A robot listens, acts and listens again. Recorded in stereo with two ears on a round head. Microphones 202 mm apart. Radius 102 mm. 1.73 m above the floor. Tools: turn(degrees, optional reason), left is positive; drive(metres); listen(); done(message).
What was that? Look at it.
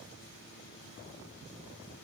listen()
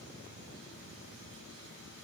listen()
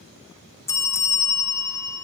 turn(degrees=30)
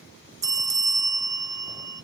turn(degrees=-15, reason="So it is at 15° right.")
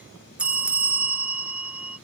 done("Facing the bell.")